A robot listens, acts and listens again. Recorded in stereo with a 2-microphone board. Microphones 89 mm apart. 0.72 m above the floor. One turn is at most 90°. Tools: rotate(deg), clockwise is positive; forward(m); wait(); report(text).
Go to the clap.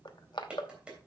rotate(30)
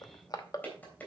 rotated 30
rotate(-15)
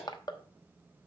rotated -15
forward(1.0)
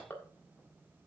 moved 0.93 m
wait()
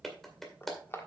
forward(1.0)
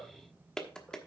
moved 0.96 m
forward(1.0)
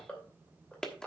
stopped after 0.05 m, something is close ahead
report("Arrived at the clap, straight ahead.")